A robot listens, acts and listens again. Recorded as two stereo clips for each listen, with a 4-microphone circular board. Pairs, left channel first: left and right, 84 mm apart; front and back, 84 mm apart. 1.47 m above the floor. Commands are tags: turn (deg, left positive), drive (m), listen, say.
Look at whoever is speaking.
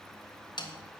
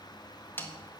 <listen/>
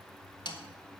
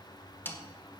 <listen/>
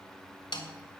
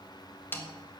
<say>I can't make out anyone speaking, only a snare drum.</say>